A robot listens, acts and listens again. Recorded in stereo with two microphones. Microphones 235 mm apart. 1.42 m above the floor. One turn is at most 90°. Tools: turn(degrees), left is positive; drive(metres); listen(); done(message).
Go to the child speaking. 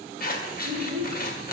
turn(degrees=-90)
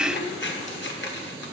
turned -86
listen()
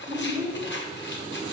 turn(degrees=-20)
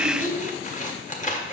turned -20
drive(metres=1.0)
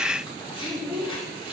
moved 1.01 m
drive(metres=1.0)
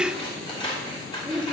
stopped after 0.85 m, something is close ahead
done("Arrived at the child speaking, straight ahead.")